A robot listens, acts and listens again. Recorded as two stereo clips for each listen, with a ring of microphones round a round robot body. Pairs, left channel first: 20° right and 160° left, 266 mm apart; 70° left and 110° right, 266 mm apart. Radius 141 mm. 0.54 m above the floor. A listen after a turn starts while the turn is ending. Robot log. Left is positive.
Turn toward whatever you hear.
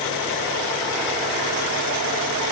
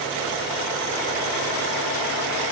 cmd idle
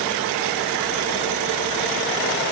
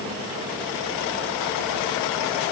cmd idle
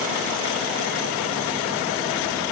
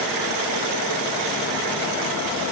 end: I can't make out anything.